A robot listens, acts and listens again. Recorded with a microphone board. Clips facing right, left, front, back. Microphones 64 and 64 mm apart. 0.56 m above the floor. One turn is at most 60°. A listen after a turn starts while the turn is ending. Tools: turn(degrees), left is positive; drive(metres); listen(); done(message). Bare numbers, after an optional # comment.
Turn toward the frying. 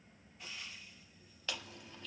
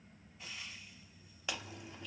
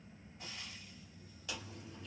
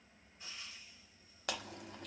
done("Facing the frying, 2 to 4 m away.")